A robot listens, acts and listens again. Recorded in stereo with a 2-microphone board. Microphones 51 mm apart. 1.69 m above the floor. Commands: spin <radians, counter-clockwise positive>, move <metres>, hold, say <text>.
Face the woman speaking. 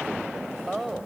spin 0.52
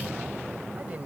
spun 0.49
hold
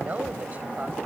hold
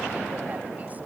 say I heard a woman speaking, but can't make it out now. It was about 25° right or 150° left.